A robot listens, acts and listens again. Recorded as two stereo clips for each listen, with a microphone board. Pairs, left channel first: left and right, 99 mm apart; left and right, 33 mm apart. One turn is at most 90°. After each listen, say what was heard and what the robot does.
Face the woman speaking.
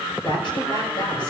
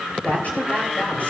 The woman speaking: about 60° left or 120° left. Turn 60° left.
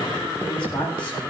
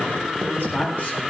So it is at 55° left. Turn 55° left.
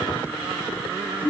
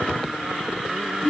The woman speaking is now 20° left. Turn 20° left.
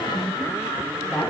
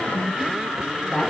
Found it: a woman speaking, straight ahead, over 4 m away.